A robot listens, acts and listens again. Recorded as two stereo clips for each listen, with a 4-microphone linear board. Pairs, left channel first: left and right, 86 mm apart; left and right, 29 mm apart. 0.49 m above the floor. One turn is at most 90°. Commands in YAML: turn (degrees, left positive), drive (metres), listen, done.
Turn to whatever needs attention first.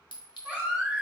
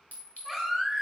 turn: -15
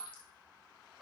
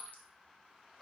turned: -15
listen: true
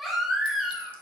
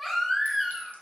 done: "Facing the baby crying, 1 to 2 m away."